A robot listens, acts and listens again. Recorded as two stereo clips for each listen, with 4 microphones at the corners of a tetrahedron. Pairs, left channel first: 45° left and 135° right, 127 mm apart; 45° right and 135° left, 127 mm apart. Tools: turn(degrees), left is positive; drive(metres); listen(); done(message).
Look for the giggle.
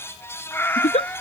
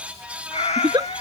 turn(degrees=80)
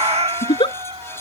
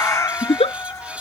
done("Found it: a giggle, straight ahead.")